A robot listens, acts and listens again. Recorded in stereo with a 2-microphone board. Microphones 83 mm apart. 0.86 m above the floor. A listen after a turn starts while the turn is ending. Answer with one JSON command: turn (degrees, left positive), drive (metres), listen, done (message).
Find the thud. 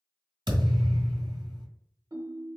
{"turn": -75}
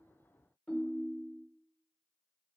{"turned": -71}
{"listen": true}
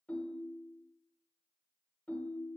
{"done": "I heard a thud, but can't make it out now. It was about straight ahead or 35° right."}